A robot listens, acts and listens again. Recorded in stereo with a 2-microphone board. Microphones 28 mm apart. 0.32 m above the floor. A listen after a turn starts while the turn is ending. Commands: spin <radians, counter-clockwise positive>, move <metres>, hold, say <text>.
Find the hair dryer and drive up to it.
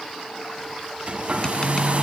spin -0.87
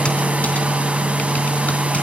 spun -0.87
spin -1.22
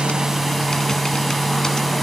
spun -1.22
move 1.0
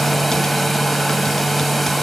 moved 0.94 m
move 1.0
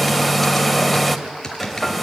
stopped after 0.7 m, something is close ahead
say I am next to the hair dryer.